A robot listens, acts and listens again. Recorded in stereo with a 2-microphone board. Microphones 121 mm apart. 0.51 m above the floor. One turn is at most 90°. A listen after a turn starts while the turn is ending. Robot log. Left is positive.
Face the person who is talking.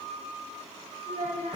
cmd yaw -90
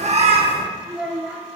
note: So it is at 10° right.
cmd yaw -10
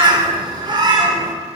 cmd idle
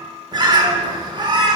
cmd idle
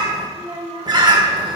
note: The child speaking is now 45° right.
cmd yaw -45
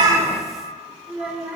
end: Found it: a child speaking, straight ahead.